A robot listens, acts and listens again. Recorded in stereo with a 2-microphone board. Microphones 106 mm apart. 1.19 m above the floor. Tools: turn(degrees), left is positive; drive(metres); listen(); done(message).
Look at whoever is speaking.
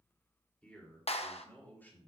turn(degrees=20)
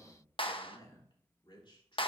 turn(degrees=125)
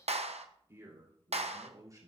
turn(degrees=-35)
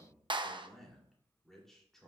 done("Facing the man speaking, 2 to 4 m away.")